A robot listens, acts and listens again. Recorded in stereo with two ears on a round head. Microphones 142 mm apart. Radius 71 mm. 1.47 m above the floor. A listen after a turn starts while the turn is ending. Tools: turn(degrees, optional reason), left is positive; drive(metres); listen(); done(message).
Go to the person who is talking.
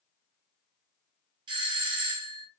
listen()
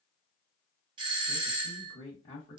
turn(degrees=35, reason="The man speaking: about 35° left or 145° left.")
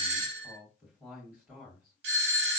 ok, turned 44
turn(degrees=-10, reason="So it is at 10° right.")
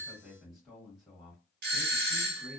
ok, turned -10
drive(metres=1.0)
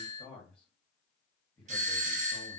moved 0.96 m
drive(metres=1.0)
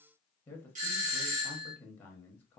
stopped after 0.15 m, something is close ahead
turn(degrees=10, reason="The man speaking is now 10° left.")
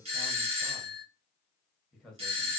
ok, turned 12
done("Arrived at the man speaking, straight ahead.")